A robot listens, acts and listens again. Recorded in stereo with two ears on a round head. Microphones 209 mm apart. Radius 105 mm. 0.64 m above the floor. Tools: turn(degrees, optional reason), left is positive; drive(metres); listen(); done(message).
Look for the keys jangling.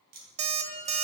turn(degrees=-45, reason="The keys jangling: about 45° right or 135° right.")
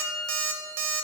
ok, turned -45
listen()
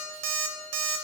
listen()
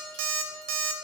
done("I heard keys jangling, but can't make it out now. It was about straight ahead or 90° right.")